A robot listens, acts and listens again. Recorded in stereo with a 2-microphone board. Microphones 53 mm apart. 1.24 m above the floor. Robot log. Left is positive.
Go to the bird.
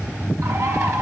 note: The bird: about 65° right or 115° right.
cmd yaw -65
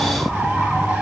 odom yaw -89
cmd idle
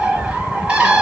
note: So it is at 20° right.
cmd yaw -20
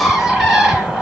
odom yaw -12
cmd fwd 1.0
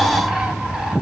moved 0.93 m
cmd idle
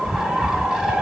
cmd fwd 1.0
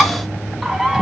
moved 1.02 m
note: The bird is now 10° right.
cmd yaw -10
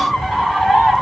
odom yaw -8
cmd fwd 1.0
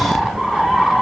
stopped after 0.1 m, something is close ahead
end: Arrived at the bird, straight ahead.